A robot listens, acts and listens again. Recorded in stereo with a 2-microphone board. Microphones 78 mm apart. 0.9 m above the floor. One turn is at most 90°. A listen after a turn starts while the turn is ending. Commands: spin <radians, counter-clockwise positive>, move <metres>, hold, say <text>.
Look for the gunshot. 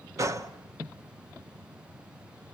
spin -0.70
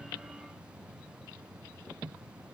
hold
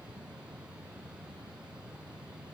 say I heard a gunshot, but can't make it out now. It was about straight ahead or 100° right.